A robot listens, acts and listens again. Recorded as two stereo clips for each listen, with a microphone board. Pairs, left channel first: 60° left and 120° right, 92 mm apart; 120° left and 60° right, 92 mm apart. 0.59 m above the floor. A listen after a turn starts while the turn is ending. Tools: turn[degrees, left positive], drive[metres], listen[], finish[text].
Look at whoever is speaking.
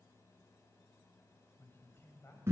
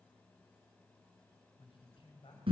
Thought: The man speaking: 120° left.
Action: turn[120]
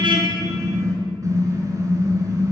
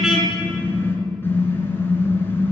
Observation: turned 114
Thought: Nothing new. It was at 10° left.
Action: turn[10]
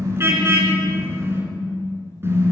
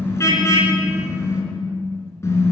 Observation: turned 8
Action: listen[]
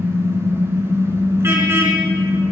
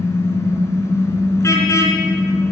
Action: finish[I heard a man speaking from this way, but can't make it out now.]